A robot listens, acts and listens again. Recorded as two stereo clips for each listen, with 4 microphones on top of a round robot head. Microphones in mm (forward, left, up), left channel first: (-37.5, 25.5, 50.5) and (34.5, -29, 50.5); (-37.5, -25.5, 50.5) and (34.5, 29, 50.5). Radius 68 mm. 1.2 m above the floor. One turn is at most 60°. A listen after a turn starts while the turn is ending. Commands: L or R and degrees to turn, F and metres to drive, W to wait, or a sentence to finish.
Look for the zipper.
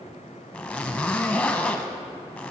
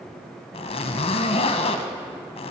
R60
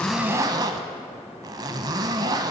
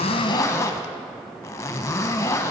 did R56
R60
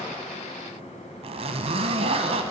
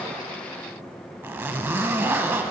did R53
R30
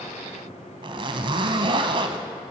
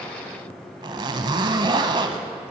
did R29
Facing the zipper, under 1 m away.